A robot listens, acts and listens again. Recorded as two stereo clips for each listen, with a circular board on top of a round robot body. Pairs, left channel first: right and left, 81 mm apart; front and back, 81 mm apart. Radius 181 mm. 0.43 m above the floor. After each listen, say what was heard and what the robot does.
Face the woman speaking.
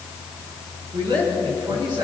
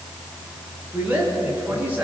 The woman speaking: 110° left. Turn 110° left.
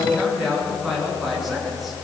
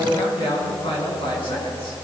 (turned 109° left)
Facing the woman speaking.